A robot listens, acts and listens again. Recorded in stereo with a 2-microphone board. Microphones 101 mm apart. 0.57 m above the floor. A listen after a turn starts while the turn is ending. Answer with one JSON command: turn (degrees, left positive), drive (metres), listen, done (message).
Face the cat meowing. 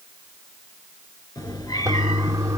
{"turn": 40}
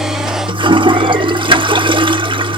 {"listen": true}
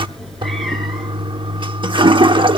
{"done": "Facing the cat meowing, 2 to 4 m away."}